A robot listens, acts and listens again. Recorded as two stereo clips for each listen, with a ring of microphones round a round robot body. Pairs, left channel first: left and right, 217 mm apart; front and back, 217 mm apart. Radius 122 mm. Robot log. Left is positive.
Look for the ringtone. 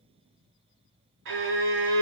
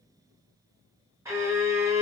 cmd idle
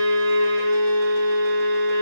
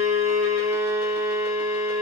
cmd idle
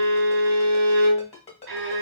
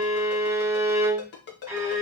note: The ringtone: 30° left.
cmd yaw +30
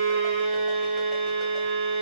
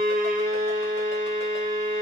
cmd idle
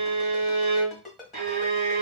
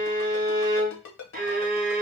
end: Found it: a ringtone, straight ahead, 1 to 2 m away.